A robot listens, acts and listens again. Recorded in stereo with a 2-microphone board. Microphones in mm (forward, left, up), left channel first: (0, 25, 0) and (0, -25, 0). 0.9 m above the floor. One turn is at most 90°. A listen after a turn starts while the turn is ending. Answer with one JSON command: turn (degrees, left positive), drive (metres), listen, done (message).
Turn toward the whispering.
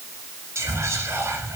{"turn": -75}
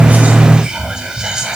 {"turn": -15}
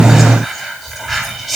{"done": "Found it: whispering, straight ahead."}